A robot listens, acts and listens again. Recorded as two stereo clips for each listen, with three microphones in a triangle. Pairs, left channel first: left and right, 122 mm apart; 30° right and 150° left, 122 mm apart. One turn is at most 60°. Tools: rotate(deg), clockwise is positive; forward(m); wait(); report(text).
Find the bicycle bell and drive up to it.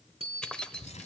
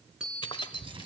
rotate(60)
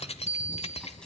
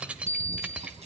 rotate(60)
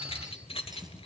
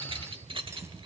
wait()
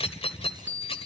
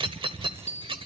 rotate(15)
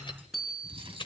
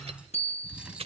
forward(1.0)
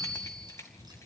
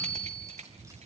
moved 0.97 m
forward(1.0)
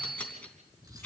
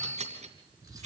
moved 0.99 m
forward(1.0)
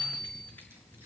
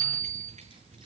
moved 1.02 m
forward(1.0)
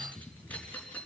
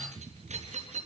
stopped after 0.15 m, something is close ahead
wait()
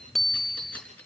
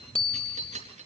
report("Arrived at the bicycle bell, straight ahead.")